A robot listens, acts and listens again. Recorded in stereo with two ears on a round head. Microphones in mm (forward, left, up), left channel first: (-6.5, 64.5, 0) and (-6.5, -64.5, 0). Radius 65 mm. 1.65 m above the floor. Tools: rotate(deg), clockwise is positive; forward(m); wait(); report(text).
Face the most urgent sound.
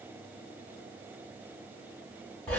wait()
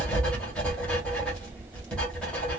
wait()
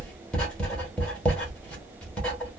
report("I can't make out anything urgent to turn to.")